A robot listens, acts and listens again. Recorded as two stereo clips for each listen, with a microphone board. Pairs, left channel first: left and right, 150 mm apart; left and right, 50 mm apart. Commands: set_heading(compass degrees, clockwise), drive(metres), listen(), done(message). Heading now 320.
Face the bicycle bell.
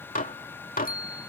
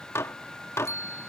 set_heading(250)
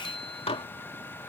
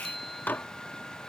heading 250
done("Facing the bicycle bell.")